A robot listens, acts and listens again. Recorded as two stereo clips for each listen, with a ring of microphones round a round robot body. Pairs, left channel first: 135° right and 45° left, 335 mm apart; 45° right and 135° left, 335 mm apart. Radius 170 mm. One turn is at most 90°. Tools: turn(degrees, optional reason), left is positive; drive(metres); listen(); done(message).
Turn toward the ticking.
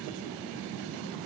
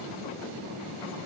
listen()
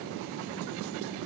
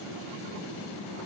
listen()
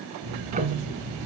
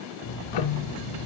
turn(degrees=-25, reason="The ticking: 25° right.")
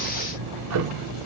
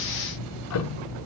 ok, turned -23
done("Facing the ticking.")